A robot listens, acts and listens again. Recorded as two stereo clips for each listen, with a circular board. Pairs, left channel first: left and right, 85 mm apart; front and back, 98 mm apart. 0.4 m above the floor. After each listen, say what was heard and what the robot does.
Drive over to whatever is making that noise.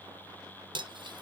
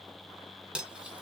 The cutlery clinking: 100° right. Turn 100° right.
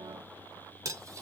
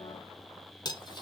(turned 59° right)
The cutlery clinking is now 40° right. Turn 40° right.
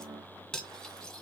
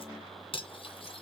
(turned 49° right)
Drive 1.0 m forward.
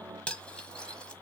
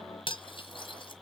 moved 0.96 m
The cutlery clinking is now 10° left. Turn 10° left.
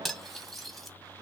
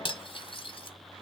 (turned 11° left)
Drive 1.0 m forward.
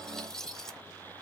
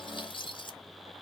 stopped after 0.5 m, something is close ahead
I am next to the cutlery clinking.